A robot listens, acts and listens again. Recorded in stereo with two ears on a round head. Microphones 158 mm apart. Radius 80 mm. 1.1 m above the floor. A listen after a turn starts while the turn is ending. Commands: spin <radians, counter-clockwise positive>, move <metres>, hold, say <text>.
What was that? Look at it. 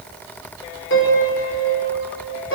spin 1.57
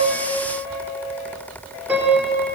spin -0.17
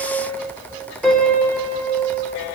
say Found it: a piano, straight ahead, over 4 m away.